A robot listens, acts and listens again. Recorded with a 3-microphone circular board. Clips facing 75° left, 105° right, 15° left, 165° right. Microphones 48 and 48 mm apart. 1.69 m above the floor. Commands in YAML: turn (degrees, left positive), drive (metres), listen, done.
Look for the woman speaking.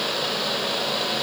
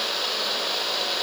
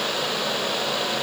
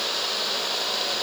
listen: true
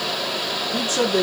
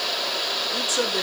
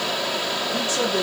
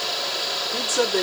turn: 120
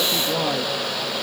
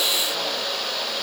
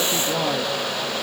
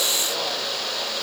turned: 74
turn: 45
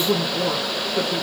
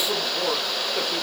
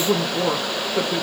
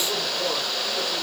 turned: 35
turn: -30
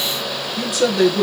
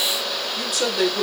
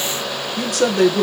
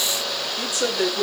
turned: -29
turn: -20
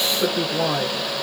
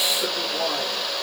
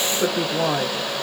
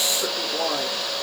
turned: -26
done: "Found it: a woman speaking, straight ahead."